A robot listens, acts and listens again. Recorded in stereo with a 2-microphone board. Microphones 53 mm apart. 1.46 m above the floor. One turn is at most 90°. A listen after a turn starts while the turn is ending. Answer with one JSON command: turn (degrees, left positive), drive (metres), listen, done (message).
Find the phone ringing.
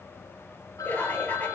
{"turn": 90}
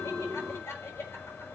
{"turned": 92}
{"listen": true}
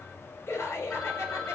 {"done": "Facing the phone ringing, over 4 m away."}